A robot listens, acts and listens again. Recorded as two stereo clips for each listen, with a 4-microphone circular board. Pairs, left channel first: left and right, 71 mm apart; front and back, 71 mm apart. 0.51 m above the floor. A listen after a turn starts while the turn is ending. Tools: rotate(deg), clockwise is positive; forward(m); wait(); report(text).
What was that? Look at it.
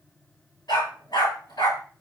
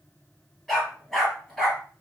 rotate(-90)
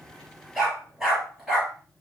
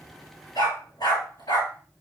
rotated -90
report("Facing the dog barking.")